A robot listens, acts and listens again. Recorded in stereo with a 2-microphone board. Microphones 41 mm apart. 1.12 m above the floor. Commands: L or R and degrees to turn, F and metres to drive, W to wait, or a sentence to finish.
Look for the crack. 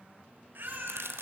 R90
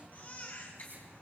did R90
Facing where the crack came from. I can't hear it now.